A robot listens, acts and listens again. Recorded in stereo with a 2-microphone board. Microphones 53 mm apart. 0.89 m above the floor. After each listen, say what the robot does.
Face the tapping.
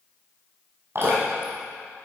Keep listening.
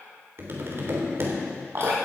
Turn 50° right.
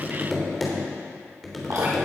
Facing the tapping, 2 to 4 m away.